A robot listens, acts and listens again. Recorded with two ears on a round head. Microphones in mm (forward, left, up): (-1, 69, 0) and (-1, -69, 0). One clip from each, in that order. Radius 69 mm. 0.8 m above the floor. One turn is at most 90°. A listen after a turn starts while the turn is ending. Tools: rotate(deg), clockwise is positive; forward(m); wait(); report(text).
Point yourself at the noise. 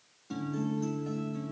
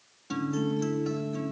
rotate(60)
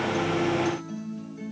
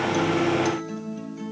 rotate(40)
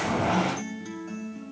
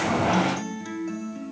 rotate(20)
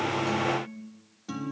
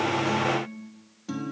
report("Facing the guitar.")